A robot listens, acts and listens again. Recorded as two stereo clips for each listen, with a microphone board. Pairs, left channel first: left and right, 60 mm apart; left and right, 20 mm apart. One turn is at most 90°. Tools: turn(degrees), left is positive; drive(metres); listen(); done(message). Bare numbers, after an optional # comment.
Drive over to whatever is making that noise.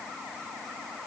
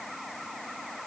listen()
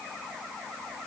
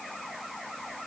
listen()
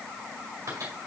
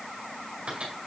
# The microwave: about 65° right or 115° right.
turn(-65)
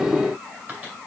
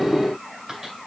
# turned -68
listen()
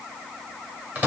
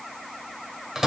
# So it is at 30° right.
turn(-30)
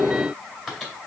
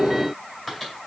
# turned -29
drive(1.0)
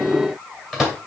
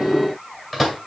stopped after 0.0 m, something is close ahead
done("Something is in my way. I am facing the microwave but have not reached it.")